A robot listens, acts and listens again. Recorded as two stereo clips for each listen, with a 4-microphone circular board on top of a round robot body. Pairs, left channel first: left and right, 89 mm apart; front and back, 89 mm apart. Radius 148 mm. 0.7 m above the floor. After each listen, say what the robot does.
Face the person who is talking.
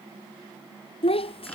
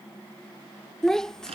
Turn 85° left.
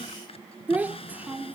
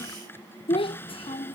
Turn 15° right.
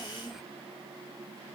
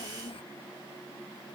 Facing the child speaking.